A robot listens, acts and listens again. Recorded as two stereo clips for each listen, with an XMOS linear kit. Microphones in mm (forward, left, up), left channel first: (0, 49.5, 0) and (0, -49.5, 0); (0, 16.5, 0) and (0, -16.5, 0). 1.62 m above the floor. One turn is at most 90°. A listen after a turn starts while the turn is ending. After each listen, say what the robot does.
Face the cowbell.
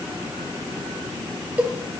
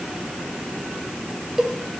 Turn 30° right.
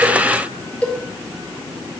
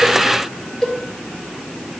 Turn 15° left.
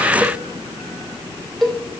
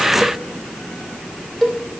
Facing the cowbell, 2 to 4 m away.